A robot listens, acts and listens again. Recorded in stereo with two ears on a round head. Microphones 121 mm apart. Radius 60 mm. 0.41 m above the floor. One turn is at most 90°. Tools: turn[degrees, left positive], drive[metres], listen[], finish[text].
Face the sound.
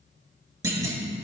Thought: The clunk: about 20° right or 160° right.
Action: turn[-20]
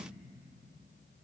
Action: listen[]
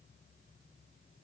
Action: finish[I heard a clunk, but can't make it out now. It was about straight ahead or 140° right.]